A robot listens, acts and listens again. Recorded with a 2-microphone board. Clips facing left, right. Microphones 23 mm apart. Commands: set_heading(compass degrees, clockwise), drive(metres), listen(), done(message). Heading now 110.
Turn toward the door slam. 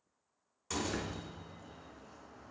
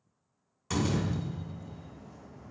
set_heading(130)
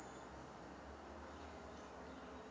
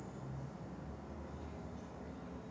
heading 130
listen()
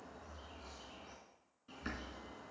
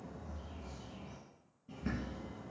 done("I heard a door slam, but can't make it out now. It was about straight ahead or 140° right.")